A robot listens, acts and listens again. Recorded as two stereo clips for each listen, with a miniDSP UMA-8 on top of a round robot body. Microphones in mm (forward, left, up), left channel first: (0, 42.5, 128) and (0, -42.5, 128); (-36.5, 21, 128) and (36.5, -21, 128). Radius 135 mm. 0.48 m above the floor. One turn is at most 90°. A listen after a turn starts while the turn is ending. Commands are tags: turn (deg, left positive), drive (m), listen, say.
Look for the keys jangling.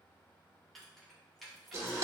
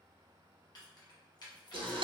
<turn deg="90"/>
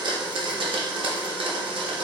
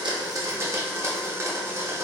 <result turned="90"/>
<turn deg="90"/>
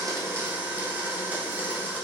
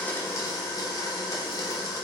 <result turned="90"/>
<listen/>
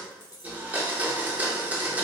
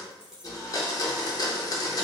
<turn deg="50"/>
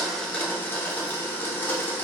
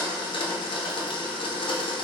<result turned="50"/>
<listen/>
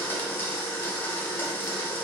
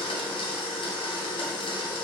<listen/>
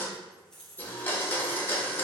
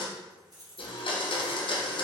<turn deg="10"/>
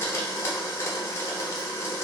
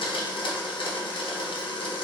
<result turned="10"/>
<listen/>
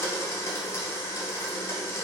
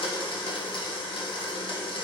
<listen/>
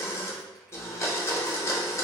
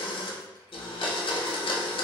<say>I heard keys jangling from this way, but can't make it out now.</say>